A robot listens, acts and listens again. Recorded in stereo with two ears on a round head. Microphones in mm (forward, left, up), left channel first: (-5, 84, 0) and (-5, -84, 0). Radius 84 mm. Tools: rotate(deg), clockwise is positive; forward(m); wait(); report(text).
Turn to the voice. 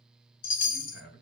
rotate(-65)
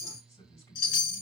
rotate(-20)
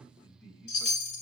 report("Found it: a man speaking, straight ahead, 2 to 4 m away.")